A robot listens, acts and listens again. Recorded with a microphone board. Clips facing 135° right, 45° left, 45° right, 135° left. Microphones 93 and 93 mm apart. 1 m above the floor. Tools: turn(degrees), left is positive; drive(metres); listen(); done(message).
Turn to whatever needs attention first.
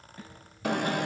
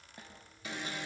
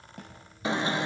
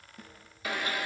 turn(degrees=-110)
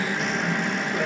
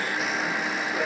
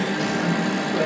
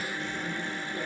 turn(degrees=-45)
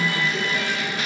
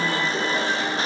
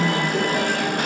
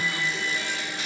turn(degrees=-10)
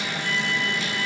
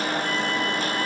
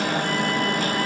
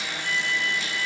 done("Found it: an alarm, straight ahead, under 1 m away.")